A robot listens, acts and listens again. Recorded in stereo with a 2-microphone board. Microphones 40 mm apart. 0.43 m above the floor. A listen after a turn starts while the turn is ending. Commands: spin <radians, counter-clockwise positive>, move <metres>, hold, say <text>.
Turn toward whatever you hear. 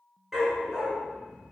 spin -0.52
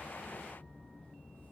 hold
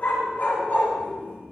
spin 0.87
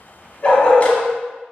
spin 0.52
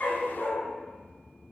spin 0.44
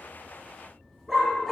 say Facing the dog barking, 1 to 2 m away.